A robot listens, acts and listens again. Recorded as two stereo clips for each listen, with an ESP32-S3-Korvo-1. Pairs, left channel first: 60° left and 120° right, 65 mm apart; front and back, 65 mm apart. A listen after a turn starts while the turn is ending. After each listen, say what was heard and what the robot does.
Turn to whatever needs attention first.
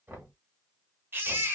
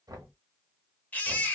The baby crying: 65° right. Turn 65° right.
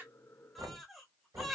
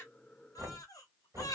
The baby crying is now 30° right. Turn 30° right.
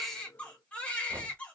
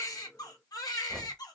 The baby crying is now 10° right. Turn 10° right.
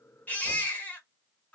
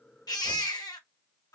Facing the baby crying.